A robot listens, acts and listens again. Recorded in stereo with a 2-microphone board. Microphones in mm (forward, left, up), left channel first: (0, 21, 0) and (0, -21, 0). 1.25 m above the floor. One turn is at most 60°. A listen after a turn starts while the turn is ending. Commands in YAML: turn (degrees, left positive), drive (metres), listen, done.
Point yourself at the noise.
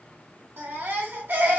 turn: -60
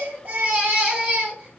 turn: -35
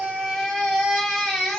done: "Facing the baby crying, 1 to 2 m away."